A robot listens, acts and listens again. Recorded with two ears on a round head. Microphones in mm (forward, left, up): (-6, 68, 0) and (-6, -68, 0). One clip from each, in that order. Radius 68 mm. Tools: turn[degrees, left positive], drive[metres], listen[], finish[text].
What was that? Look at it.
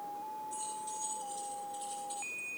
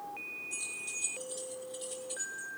Thought: The keys jangling: about 25° right or 155° right.
Action: turn[-25]
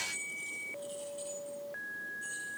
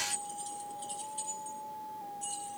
Thought: So it is at 135° right.
Action: turn[-135]
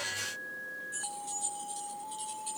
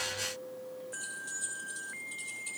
Action: finish[Found it: keys jangling, straight ahead.]